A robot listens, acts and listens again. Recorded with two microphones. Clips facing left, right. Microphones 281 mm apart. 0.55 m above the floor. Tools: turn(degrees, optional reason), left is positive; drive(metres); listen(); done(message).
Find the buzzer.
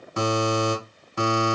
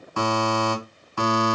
turn(degrees=20, reason="The buzzer: about 20° left or 160° left.")
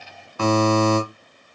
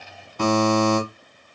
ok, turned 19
done("Facing the buzzer.")